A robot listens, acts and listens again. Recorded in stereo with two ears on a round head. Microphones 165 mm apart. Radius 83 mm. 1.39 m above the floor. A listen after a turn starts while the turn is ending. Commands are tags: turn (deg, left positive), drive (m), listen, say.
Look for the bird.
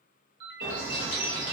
<turn deg="-40"/>
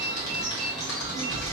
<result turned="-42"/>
<say>Facing the bird, 1 to 2 m away.</say>